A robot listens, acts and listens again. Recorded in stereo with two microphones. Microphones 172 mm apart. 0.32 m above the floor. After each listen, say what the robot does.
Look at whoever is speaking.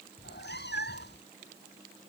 Keep listening.
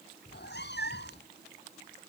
Keep listening.
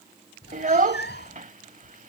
Turn 45° right.
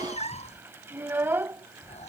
Turn 15° right.
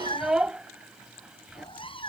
Found it: a child speaking, straight ahead.